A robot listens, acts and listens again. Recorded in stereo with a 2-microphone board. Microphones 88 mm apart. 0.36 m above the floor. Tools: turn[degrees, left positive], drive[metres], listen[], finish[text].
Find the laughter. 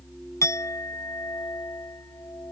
Action: listen[]
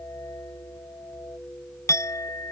Action: listen[]
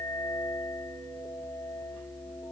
Action: finish[I can't make out laughter to turn to.]